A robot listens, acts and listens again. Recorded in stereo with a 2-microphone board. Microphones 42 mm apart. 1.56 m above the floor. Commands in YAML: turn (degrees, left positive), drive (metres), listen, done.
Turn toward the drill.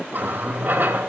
listen: true
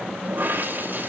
listen: true
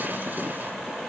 done: "I can't make out a drill, only a running tap."